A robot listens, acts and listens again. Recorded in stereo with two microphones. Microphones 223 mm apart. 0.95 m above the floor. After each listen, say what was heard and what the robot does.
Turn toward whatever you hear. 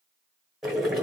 Turn 30° left.
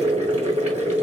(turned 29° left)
So it is at 35° right. Turn 35° right.
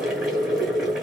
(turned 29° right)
Found it: boiling, straight ahead.